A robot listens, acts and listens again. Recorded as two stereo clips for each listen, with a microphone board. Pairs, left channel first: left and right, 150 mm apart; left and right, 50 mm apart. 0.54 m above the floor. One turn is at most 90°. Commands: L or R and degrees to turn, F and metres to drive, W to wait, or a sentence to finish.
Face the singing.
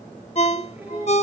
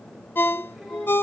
R30
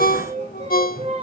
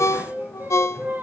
R90
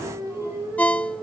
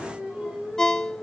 R10
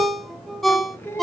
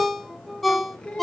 L15
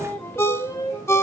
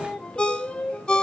L20
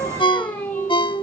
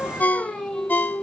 L10
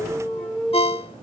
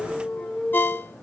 Found it: singing, straight ahead.